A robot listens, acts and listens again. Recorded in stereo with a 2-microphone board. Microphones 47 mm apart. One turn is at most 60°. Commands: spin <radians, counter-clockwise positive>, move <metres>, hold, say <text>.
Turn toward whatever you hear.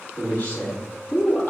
spin 0.79
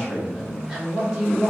spin -0.26
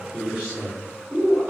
spin -0.44
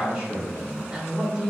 spin -0.26
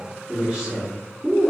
say Facing the man speaking, 1 to 2 m away.